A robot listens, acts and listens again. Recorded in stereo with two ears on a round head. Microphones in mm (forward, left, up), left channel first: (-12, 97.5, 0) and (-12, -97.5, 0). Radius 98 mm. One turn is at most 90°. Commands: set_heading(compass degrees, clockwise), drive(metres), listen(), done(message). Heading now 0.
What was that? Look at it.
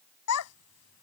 set_heading(270)
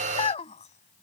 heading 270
set_heading(240)
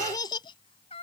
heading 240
set_heading(210)
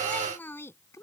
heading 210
set_heading(195)
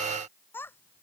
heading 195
set_heading(185)
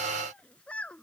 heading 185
done("Facing the child speaking.")